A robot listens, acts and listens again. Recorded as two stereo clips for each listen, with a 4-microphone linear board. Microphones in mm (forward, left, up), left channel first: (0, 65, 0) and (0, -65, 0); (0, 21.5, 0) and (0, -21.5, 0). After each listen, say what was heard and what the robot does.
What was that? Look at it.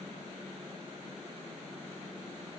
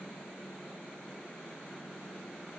Keep listening.
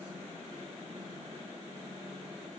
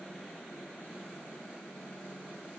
Keep listening.
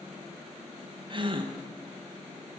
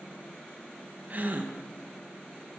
The gasp: about 40° right or 140° right. Turn 40° right.
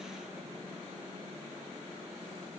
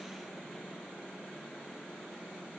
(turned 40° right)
Keep listening.
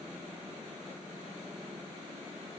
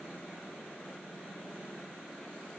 I heard a gasp, but can't make it out now. It was about straight ahead or 100° right.